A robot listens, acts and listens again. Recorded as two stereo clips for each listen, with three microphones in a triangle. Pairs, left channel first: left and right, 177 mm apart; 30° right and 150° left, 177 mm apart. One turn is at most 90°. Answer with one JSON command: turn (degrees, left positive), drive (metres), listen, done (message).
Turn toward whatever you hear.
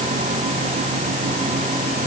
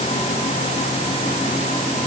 {"listen": true}
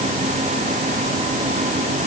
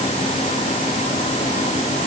{"listen": true}
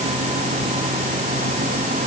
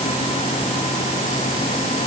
{"done": "I can't make out anything."}